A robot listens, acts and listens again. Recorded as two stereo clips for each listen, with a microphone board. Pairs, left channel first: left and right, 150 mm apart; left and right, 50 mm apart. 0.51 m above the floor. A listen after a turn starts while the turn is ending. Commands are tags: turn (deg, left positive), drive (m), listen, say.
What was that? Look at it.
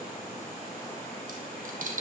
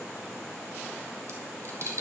<turn deg="-65"/>
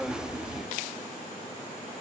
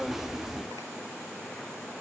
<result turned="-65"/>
<listen/>
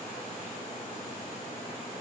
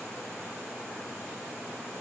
<say>I heard a dropped coin, but can't make it out now. It was about straight ahead or 50° right.</say>